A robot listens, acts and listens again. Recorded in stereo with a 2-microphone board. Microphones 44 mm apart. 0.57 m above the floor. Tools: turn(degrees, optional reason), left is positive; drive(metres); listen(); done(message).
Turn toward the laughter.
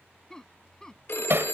turn(degrees=30)
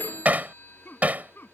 turn(degrees=125, reason="So it is at 125° left.")
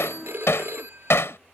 listen()
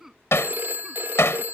turn(degrees=-10, reason="The laughter is now 10° right.")
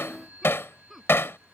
done("Facing the laughter.")